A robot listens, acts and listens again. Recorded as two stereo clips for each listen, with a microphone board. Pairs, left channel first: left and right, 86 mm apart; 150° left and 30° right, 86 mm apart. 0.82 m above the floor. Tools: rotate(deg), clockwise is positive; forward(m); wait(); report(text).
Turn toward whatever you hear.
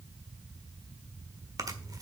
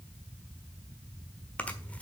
rotate(135)
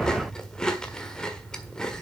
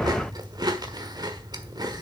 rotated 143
rotate(-10)
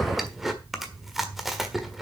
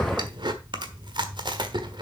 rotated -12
report("Facing the chewing.")